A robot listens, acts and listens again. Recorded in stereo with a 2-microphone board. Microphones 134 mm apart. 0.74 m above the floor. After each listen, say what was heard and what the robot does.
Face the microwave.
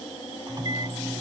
The microwave: about 30° right or 150° right. Turn 30° right.
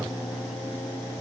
Keep listening.
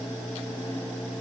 Keep listening.
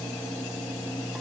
Found it: a microwave, straight ahead.